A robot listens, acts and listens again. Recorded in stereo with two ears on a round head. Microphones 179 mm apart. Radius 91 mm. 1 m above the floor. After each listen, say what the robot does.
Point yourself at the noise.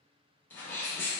Turn 30° left.
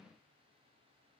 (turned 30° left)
Keep listening.
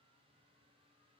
I heard a sneeze, but can't make it out now. It was about 20° right or 140° left.